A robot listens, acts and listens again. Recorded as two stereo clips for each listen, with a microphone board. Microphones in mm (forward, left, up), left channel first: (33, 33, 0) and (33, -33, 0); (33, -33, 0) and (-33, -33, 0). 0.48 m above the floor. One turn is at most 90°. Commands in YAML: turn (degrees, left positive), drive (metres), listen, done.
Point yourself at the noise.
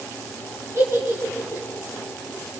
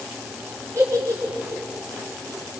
turn: -90
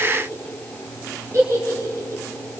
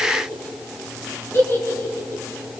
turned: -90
turn: -45
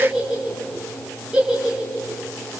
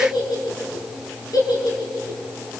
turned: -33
turn: -15
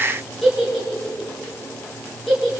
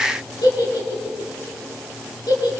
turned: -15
done: "Facing the giggle, over 4 m away."